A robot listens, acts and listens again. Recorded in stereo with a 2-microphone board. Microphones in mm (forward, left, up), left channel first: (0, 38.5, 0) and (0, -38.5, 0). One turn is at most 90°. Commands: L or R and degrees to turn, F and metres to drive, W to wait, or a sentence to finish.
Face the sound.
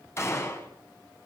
L30
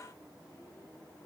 W
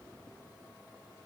I heard a gunshot, but can't make it out now. It was about straight ahead or 120° left.